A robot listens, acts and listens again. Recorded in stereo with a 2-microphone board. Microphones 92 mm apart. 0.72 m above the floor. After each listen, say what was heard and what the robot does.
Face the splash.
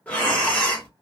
Keep listening.
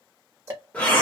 Keep listening.
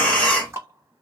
I can't make out a splash, only ticking and breathing.